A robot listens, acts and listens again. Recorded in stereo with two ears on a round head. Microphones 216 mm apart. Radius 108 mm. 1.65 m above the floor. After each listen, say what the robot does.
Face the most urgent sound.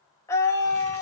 Turn 30° left.
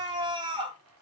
Turn 20° right.
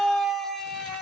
Facing the scream.